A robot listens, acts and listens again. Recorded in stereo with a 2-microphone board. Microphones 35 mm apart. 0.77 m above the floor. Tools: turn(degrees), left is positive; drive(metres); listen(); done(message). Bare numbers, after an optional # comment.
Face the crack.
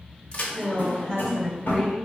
# The crack: about 35° left or 145° left.
turn(35)
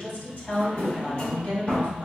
listen()
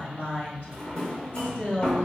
done("I heard a crack, but can't make it out now. It was about straight ahead or 110° left.")